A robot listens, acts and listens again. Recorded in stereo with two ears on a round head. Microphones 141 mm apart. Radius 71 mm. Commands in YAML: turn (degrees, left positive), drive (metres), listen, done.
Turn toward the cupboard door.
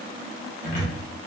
turn: 50
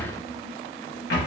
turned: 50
turn: 80
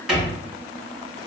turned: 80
done: "Facing the cupboard door."